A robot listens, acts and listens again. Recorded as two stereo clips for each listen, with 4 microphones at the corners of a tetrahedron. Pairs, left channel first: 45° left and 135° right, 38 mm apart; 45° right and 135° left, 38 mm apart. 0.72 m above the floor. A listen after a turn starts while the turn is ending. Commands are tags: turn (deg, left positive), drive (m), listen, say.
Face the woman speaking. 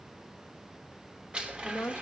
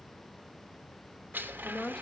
<turn deg="25"/>
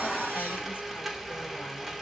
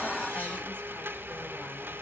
<listen/>
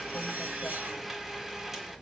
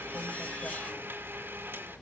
<listen/>
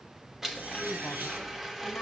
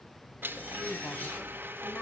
<say>Facing where the woman speaking came from. I can't hear it now.</say>